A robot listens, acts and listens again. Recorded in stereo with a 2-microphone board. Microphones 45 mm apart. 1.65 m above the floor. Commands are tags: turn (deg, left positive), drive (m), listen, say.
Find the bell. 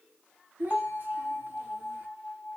<turn deg="55"/>
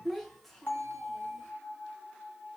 <turn deg="65"/>
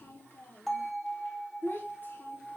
<say>Found it: a bell, straight ahead, 1 to 2 m away.</say>